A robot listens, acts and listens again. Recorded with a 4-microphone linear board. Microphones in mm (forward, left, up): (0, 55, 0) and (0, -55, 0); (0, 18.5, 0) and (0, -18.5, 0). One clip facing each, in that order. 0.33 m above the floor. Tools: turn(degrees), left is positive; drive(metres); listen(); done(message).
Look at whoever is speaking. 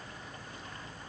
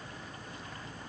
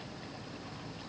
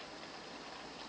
listen()
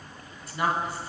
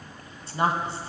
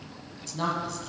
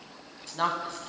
turn(degrees=-30)
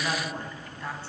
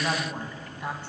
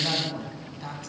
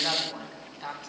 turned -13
turn(degrees=-15)
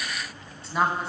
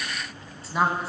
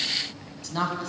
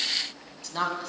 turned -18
done("Found it: a woman speaking, straight ahead.")